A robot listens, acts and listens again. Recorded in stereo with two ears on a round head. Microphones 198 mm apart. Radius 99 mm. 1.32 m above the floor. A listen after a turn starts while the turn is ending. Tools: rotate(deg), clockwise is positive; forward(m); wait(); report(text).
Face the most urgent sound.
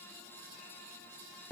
wait()
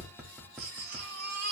rotate(45)
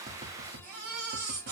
rotate(90)
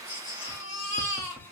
rotate(-30)
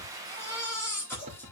rotate(-10)
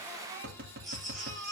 report("Found it: a baby crying, straight ahead.")